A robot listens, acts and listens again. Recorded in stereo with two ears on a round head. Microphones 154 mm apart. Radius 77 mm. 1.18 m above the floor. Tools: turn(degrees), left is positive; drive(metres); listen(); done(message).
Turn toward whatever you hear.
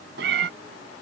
turn(degrees=-65)
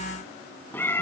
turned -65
turn(degrees=15)
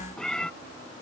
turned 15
done("Facing the cat meowing.")